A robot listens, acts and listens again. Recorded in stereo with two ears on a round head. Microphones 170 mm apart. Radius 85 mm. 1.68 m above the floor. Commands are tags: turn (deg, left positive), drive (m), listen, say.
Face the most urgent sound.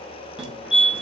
<turn deg="-30"/>
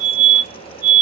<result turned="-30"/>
<turn deg="25"/>
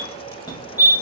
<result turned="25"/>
<turn deg="25"/>
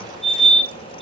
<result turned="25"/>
<say>Facing the fire alarm.</say>